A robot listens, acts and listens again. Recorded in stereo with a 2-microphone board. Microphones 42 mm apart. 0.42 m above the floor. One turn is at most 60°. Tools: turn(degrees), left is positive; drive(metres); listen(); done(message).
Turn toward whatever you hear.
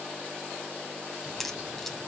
turn(degrees=30)
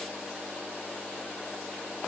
listen()
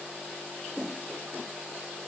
done("I heard a crack, but can't make it out now. It was about 25° right or 145° left.")